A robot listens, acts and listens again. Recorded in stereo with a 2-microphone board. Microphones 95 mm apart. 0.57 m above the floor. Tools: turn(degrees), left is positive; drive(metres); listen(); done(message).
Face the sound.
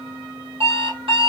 turn(degrees=-90)
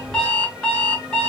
done("Found it: an alarm clock, straight ahead, 1 to 2 m away.")